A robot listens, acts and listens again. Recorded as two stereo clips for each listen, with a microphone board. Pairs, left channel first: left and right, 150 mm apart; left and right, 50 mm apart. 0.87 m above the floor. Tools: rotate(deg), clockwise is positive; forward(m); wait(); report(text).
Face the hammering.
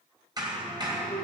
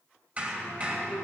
rotate(30)
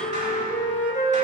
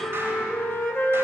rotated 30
wait()
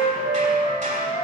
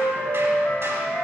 wait()
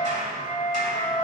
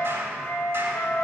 rotate(120)
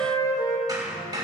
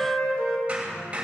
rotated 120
rotate(25)
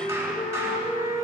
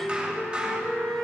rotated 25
rotate(20)
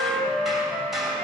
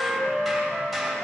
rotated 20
report("Found it: hammering, straight ahead.")